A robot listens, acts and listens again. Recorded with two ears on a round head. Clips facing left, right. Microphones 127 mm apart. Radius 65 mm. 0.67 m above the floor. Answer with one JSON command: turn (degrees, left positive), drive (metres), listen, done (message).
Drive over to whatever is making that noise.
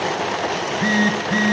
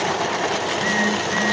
{"turn": 40}
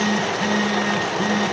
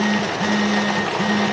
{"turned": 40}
{"drive": 1.0}
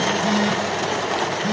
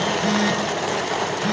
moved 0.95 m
{"drive": 1.0}
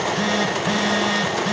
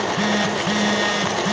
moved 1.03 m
{"drive": 1.0}
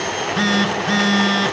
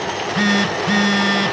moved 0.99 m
{"drive": 1.0}
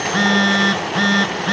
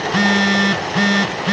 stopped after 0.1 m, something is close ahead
{"turn": -10}
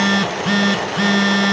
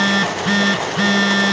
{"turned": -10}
{"done": "Arrived at the phone buzzing, straight ahead."}